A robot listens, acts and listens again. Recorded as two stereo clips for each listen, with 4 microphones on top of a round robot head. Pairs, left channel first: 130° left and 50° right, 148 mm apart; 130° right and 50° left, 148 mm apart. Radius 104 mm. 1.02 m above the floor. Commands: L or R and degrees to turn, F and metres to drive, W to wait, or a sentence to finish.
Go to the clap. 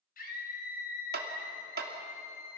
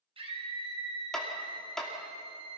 R45
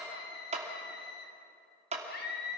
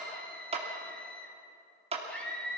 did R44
F1.0
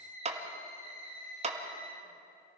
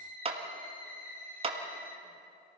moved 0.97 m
F1.0
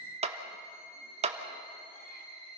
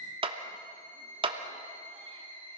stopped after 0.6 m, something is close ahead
I am next to the clap.